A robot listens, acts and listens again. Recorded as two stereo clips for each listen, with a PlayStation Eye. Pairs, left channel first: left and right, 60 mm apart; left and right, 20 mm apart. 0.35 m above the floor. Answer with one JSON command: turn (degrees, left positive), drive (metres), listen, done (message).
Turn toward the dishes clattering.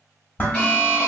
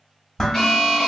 {"turn": 35}
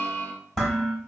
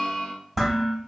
{"turn": 10}
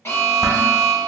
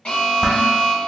{"listen": true}
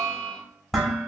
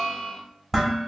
{"done": "Found it: dishes clattering, straight ahead, under 1 m away."}